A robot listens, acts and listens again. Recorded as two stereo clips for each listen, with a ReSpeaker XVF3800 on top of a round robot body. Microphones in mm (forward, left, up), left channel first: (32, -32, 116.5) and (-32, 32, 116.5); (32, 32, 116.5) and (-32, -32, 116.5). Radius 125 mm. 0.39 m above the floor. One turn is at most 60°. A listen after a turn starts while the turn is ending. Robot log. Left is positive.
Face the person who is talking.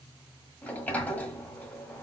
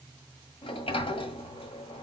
cmd idle
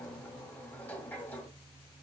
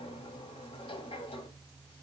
cmd idle
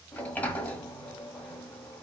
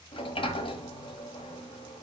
end: I can't make out anyone speaking to turn to.